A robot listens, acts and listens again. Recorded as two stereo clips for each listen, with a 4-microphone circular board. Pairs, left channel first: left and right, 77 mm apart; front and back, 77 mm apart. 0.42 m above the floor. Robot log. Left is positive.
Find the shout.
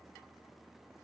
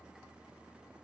cmd idle
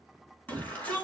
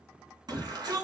note: The shout: 160° left.
cmd yaw +160
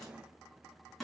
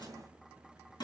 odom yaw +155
end: Found it: a shout, straight ahead, over 4 m away.